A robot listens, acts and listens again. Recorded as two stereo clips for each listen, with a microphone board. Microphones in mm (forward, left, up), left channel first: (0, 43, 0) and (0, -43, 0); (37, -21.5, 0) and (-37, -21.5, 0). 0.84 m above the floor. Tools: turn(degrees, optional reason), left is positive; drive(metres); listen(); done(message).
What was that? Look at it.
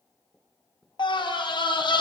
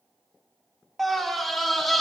turn(degrees=90, reason="The scream: 90° left.")
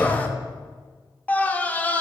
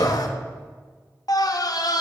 turn(degrees=20, reason="The scream is now 20° left.")
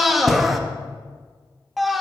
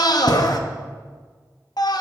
done("Facing the scream, under 1 m away.")